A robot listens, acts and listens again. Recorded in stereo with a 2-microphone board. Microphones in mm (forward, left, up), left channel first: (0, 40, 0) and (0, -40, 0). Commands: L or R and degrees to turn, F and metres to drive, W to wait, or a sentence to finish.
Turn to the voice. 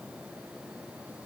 W
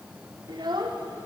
R70
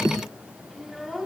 Found it: a child speaking, straight ahead.